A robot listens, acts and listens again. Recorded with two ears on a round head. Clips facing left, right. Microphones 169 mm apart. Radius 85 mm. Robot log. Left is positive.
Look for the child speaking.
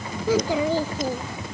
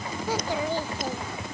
note: The child speaking: about 70° left or 110° left.
cmd yaw +70
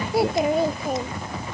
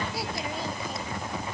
note: So it is at 45° left.
cmd yaw +45
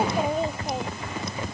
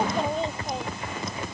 end: Facing the child speaking.